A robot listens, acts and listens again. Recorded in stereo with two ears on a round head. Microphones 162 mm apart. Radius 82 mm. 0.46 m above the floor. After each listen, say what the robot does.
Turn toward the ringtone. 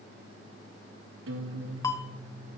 Turn 20° left.
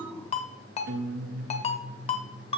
Turn 140° left.
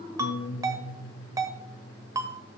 Turn 20° right.
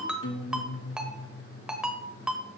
Found it: a ringtone, straight ahead, 1 to 2 m away.